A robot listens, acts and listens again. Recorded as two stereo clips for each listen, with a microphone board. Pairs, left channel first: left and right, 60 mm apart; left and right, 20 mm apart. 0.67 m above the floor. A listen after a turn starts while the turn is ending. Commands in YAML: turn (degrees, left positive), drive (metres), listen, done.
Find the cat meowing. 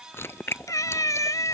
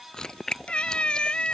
turn: 70
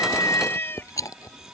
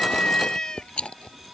turn: 40
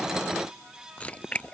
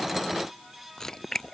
listen: true
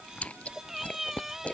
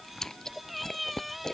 done: "Facing the cat meowing."